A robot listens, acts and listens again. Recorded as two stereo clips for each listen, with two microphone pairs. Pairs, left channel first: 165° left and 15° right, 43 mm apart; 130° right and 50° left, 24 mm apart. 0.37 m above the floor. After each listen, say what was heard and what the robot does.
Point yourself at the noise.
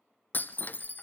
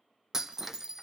The breaking glass: 120° left. Turn 120° left.
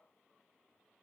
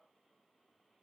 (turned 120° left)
I heard breaking glass from this way, but can't make it out now.